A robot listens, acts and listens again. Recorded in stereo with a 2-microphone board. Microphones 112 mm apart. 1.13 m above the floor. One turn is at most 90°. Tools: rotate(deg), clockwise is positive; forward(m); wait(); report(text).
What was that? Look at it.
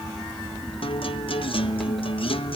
rotate(-60)
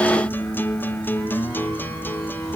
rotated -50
rotate(-20)
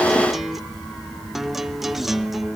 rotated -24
report("Facing the guitar.")